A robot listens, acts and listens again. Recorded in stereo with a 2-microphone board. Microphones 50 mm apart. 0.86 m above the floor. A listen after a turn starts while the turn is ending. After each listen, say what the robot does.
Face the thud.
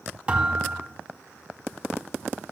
Turn 25° right.
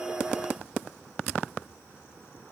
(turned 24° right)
Keep listening.
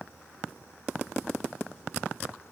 I heard a thud, but can't make it out now. It was about 5° right or 130° right.